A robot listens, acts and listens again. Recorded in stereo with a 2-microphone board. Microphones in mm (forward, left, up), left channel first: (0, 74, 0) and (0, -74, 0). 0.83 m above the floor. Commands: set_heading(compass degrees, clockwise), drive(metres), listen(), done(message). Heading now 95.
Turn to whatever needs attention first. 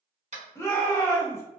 set_heading(75)
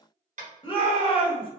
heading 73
set_heading(293)
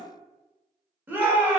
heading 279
set_heading(294)
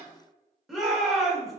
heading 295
done("Facing the shout, 1 to 2 m away.")